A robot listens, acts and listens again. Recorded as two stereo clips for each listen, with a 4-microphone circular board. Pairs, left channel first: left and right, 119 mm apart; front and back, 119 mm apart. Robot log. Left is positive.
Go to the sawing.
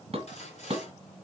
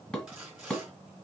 note: The sawing: 95° left.
cmd yaw +95
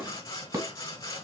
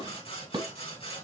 note: The sawing is now 35° left.
cmd yaw +35
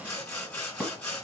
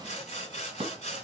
note: The sawing is now 10° left.
cmd yaw +10
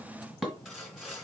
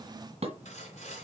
cmd fwd 1.0
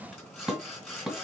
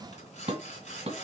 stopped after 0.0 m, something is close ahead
end: Blocked. The sawing is further on, straight ahead.